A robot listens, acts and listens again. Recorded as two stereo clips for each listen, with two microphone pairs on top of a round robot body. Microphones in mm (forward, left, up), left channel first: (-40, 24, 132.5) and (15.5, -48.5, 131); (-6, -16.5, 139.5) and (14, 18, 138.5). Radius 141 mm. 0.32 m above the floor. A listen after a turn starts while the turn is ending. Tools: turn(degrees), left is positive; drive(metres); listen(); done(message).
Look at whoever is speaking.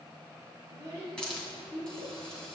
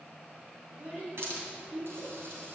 turn(degrees=15)
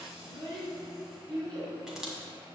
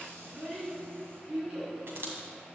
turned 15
done("Found it: a child speaking, straight ahead.")